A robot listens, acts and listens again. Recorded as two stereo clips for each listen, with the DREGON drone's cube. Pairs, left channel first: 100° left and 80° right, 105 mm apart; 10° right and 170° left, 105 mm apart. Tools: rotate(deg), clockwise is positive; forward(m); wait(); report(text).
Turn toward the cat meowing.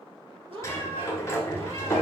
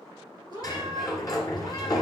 rotate(55)
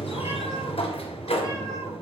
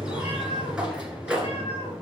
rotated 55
wait()
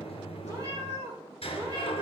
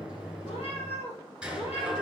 rotate(30)
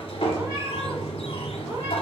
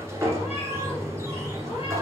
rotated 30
wait()
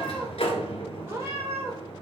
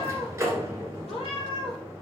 rotate(15)
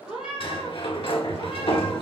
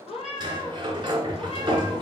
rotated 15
report("Facing the cat meowing, 2 to 4 m away.")